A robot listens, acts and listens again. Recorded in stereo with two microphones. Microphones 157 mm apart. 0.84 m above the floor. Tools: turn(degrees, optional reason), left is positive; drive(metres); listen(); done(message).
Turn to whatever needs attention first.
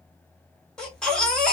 turn(degrees=30)
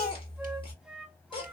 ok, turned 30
turn(degrees=145, reason="So it is at 145° left.")
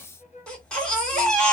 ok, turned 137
done("Found it: a baby crying, straight ahead.")